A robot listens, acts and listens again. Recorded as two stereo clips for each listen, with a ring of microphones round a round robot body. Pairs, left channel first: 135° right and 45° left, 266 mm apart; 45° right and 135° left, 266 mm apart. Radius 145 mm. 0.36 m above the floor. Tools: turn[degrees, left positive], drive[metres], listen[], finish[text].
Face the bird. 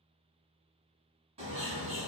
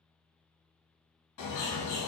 Thought: The bird: 25° right.
Action: turn[-25]
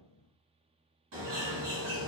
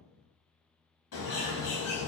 Action: finish[Facing the bird.]